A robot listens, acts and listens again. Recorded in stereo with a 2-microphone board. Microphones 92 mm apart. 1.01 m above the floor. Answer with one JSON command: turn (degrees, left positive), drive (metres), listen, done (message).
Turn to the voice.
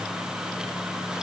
{"listen": true}
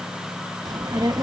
{"turn": -45}
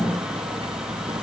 {"turn": -95}
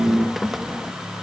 {"done": "Facing the child speaking."}